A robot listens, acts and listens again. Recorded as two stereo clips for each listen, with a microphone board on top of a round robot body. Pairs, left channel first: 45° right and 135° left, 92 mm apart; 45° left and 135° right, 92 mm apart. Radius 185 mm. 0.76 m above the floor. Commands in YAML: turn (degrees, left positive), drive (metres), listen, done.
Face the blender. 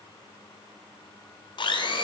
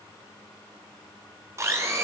turn: -75
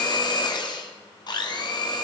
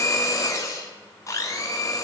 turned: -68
turn: -10
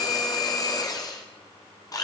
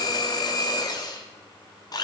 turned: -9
done: "Found it: a blender, straight ahead, 1 to 2 m away."